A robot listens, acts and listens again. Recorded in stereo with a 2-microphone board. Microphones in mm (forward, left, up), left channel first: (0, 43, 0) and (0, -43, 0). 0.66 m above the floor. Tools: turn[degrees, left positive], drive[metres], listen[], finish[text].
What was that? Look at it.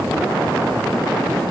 Action: listen[]
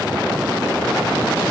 Action: listen[]
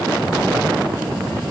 Action: finish[I can't make out anything to turn to.]